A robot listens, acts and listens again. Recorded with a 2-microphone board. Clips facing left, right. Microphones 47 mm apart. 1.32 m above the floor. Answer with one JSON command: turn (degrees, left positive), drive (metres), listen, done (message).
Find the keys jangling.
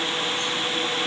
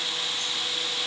{"listen": true}
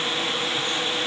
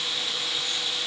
{"listen": true}
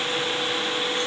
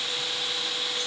{"done": "I can't make out keys jangling."}